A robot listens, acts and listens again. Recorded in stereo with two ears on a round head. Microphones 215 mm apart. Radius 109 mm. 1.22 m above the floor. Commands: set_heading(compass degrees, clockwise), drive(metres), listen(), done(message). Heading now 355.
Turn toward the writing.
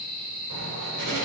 set_heading(85)
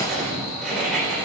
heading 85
done("Facing the writing, 2 to 4 m away.")